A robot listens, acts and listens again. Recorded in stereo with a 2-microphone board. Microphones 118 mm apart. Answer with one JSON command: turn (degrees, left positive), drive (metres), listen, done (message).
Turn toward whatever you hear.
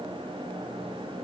{"listen": true}
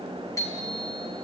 {"turn": 30}
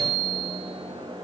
{"done": "Found it: a bicycle bell, straight ahead, over 4 m away."}